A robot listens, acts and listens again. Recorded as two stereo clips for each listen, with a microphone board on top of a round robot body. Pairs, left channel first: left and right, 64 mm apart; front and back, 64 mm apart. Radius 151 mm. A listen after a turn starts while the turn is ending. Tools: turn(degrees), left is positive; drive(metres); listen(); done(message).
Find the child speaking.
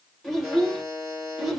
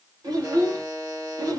turn(degrees=-175)
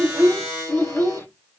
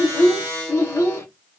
turn(degrees=40)
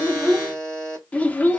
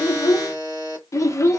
turn(degrees=30)
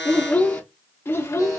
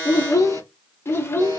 turn(degrees=45)
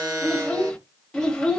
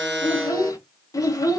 turn(degrees=10)
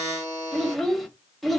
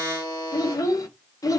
done("Facing the child speaking, 1 to 2 m away.")